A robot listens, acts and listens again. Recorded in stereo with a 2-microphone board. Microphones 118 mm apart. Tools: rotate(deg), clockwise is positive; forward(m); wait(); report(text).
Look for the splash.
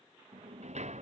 wait()
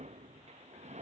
wait()
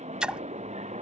rotate(30)
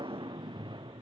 wait()
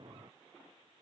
report("I heard a splash, but can't make it out now. It was about 25° left or 145° right.")